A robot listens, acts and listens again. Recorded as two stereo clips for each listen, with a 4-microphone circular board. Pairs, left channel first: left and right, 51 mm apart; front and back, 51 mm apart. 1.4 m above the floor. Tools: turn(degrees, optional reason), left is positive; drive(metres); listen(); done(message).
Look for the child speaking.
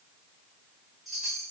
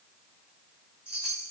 listen()
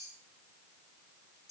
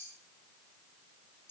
listen()
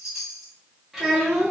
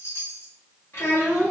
turn(degrees=-15, reason="The child speaking: 15° right.")
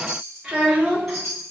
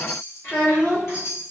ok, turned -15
turn(degrees=-30, reason="The child speaking is now 30° right.")
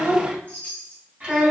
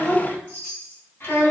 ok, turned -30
turn(degrees=-20, reason="The child speaking is now 20° right.")
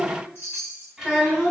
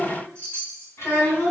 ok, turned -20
done("Found it: a child speaking, straight ahead, 1 to 2 m away.")